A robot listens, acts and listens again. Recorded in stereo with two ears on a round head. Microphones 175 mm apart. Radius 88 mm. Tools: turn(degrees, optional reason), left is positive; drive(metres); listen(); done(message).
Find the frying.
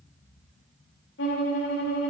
listen()
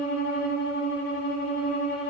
listen()
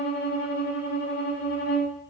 done("I can't make out frying, only a violin.")